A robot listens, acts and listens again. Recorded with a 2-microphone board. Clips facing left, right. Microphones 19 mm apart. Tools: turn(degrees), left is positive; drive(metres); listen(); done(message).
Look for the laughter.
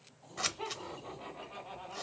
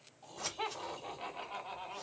turn(degrees=-40)
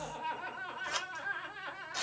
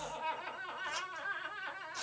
turn(degrees=15)
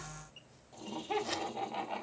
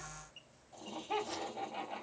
turn(degrees=30)
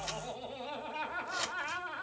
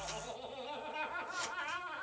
turn(degrees=10)
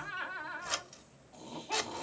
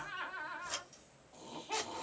done("Facing the laughter, 1 to 2 m away.")